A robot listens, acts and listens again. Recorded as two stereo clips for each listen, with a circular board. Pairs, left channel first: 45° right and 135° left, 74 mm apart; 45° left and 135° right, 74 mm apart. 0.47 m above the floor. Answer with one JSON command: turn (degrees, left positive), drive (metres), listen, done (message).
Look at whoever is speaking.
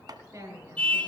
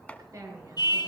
{"turn": 180}
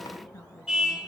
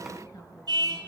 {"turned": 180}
{"listen": true}
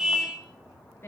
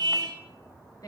{"turn": 10}
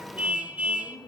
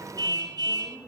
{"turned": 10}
{"done": "Found it: a woman speaking, straight ahead."}